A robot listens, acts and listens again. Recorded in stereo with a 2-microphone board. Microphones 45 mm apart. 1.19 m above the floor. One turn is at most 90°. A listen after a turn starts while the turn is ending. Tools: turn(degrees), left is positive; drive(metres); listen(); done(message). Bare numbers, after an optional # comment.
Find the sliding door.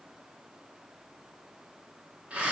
listen()
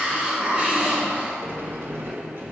# The sliding door: about 55° right or 125° right.
turn(-55)
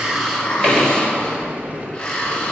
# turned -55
# So it is at 40° right.
turn(-40)
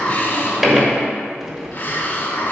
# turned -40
# The sliding door is now 10° right.
turn(-10)
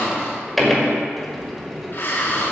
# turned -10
done("Facing the sliding door.")